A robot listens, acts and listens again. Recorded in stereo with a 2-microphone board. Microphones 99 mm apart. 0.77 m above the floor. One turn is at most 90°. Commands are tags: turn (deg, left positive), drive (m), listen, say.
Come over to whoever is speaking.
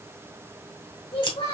<turn deg="90"/>
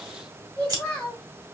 <drive m="1.0"/>
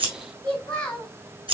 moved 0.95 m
<turn deg="10"/>
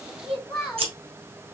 <drive m="1.0"/>
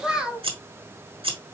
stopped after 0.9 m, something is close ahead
<turn deg="-10"/>
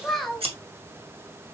<say>I am next to the child speaking.</say>